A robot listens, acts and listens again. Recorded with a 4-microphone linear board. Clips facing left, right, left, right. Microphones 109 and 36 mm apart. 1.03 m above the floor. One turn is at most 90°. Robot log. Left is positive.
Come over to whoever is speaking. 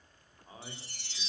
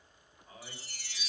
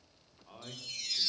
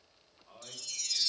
note: The man speaking: about 35° left or 145° left.
cmd yaw +35
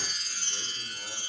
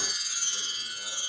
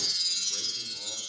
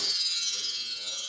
cmd idle
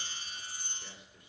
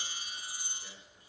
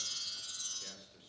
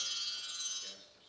note: So it is at 110° left.
cmd yaw +90
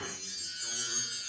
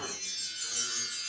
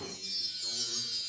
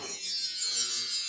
note: Nothing new. It was at 20° left.
cmd yaw +20
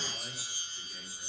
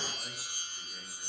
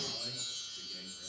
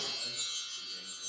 cmd idle
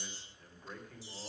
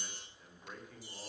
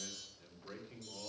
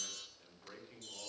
cmd fwd 1.0
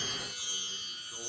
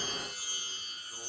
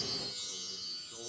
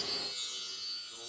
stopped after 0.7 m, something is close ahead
cmd idle
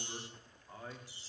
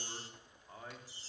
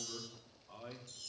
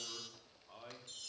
end: Something is in my way. I am facing the man speaking but have not reached it.